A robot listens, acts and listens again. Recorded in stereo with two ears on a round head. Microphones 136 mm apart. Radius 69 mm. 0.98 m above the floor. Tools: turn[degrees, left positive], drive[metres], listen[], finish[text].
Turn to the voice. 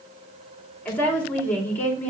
Action: turn[30]
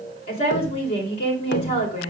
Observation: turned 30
Thought: So it is at 135° left.
Action: turn[135]
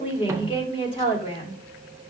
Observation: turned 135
Thought: The woman speaking is now 35° left.
Action: turn[35]
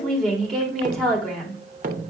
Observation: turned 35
Action: finish[Found it: a woman speaking, straight ahead.]